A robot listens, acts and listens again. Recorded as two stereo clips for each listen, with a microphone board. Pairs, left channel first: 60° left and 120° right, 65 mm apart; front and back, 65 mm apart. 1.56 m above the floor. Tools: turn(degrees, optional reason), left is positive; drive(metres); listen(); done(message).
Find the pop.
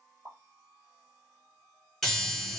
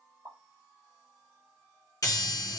turn(degrees=-165, reason="The pop: 165° right.")
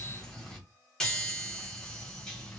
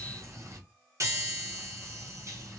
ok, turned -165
done("I heard a pop from this way, but can't make it out now.")